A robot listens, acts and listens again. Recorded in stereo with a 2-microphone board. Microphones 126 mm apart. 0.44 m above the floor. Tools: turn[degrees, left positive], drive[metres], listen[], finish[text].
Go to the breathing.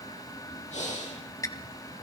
Thought: The breathing: about 70° left or 110° left.
Action: turn[70]
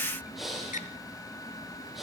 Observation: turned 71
Action: drive[1.0]
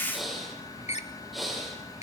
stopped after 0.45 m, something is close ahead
Action: finish[Blocked. The breathing is further on, straight ahead.]